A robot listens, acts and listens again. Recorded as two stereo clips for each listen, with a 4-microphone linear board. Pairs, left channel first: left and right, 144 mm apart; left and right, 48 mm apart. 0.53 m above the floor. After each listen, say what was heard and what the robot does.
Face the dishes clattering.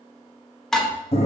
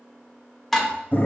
Turn 30° left.
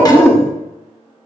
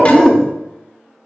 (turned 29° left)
Keep listening.
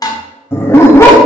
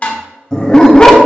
So it is at 150° left. Turn 150° left.
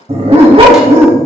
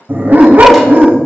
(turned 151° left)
Keep listening.
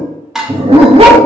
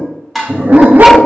Found it: dishes clattering, straight ahead.